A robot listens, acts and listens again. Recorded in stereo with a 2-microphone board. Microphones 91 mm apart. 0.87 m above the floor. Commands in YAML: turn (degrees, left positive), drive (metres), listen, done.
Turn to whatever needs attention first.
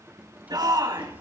turn: -50
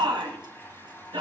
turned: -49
turn: -80
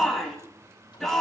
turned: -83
done: "Found it: a shout, straight ahead, over 4 m away."